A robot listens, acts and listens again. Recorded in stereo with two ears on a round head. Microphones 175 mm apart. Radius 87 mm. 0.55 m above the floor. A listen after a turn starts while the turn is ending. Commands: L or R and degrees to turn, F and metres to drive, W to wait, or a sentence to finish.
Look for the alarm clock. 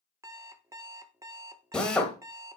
R15
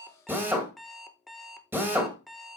Found it: an alarm clock, straight ahead.